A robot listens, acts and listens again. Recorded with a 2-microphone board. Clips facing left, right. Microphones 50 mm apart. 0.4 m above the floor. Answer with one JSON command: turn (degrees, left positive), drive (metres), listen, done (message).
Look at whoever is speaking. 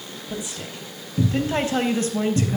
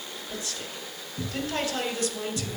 {"turn": 40}
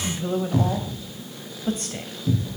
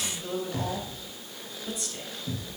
{"turn": 50}
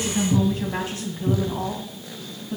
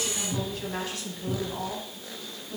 {"turn": 25}
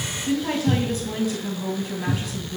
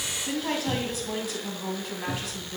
{"done": "Facing the woman speaking, 2 to 4 m away."}